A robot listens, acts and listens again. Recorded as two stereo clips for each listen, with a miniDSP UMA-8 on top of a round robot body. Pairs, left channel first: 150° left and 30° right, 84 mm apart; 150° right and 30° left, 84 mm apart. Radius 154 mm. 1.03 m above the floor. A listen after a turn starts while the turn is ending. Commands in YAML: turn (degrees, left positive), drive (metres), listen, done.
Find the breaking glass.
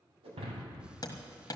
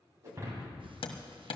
turn: -25
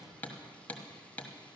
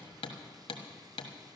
done: "I heard breaking glass from this way, but can't make it out now."